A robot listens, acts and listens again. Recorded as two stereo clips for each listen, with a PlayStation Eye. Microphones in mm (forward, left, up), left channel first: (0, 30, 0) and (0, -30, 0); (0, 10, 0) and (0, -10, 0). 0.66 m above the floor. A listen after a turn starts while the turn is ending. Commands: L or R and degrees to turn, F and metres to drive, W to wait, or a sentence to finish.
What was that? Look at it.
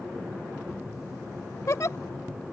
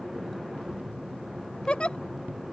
L60
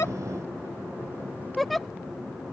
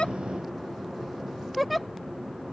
Facing the giggle.